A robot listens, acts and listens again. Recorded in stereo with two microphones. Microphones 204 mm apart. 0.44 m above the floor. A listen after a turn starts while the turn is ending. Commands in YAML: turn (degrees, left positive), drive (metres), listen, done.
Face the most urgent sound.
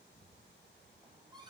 listen: true
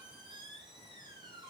listen: true
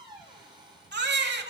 turn: -60
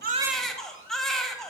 done: "Facing the baby crying."